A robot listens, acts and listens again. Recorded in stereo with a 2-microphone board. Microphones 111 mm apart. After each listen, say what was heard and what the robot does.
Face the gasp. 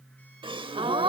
The gasp: about 50° right or 130° right. Turn 50° right.
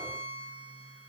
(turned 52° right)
Keep listening.
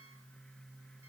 I heard a gasp, but can't make it out now. It was about straight ahead or 75° right.